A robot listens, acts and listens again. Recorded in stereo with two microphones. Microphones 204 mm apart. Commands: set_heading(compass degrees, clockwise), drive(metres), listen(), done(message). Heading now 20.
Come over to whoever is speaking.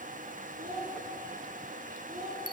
set_heading(60)
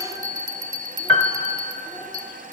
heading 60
listen()
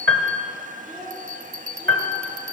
drive(1.0)
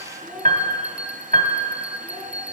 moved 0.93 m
drive(1.0)
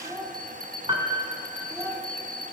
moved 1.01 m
set_heading(75)
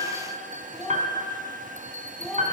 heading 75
drive(1.0)
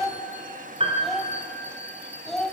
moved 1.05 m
drive(1.0)
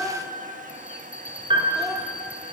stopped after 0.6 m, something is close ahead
listen()
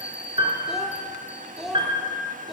done("I am next to the child speaking.")